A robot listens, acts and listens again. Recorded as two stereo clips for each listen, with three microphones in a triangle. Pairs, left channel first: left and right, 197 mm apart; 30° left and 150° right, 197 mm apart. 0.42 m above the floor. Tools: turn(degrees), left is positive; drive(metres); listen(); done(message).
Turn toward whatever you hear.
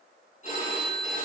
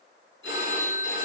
turn(degrees=40)
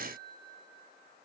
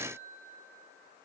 listen()
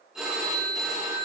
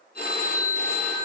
done("Facing the phone ringing, 2 to 4 m away.")